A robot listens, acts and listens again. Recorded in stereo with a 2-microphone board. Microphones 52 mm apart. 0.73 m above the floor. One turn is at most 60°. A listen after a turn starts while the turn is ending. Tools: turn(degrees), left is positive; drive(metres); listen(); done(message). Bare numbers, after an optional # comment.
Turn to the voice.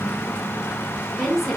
turn(-30)
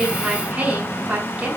# So it is at 150° right.
turn(-60)
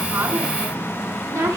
# The woman speaking is now 105° right.
turn(-60)
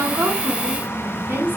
# The woman speaking is now 35° right.
turn(-35)
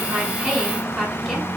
done("Found it: a woman speaking, straight ahead.")